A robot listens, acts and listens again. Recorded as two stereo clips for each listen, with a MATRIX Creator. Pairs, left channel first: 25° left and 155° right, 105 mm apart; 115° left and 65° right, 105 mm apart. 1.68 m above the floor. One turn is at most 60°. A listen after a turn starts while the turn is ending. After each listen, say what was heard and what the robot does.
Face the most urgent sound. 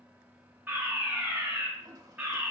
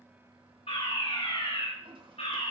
The fire alarm: 130° left. Turn 60° left.
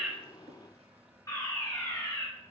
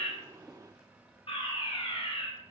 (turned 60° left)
The fire alarm is now 80° left. Turn 60° left.
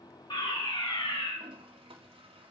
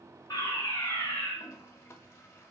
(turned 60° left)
The fire alarm is now 45° left. Turn 45° left.
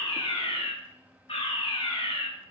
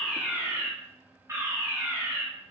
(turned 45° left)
Facing the fire alarm.